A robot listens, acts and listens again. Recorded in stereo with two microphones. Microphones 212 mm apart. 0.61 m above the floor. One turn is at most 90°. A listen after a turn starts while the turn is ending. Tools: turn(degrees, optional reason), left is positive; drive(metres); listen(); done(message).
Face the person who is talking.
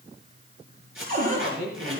turn(degrees=-45, reason="The man speaking: about 45° right or 135° right.")
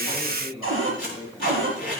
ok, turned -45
turn(degrees=-15, reason="So it is at 15° right.")
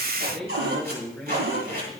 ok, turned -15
done("Facing the man speaking.")